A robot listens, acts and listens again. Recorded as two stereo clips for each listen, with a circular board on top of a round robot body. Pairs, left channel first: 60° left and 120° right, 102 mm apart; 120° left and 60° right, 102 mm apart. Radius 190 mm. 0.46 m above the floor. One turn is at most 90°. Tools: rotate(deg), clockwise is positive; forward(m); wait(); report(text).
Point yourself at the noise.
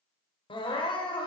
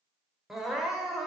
rotate(-25)
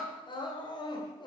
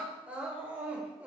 rotate(-20)
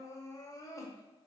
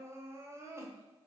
report("Facing the crying, 2 to 4 m away.")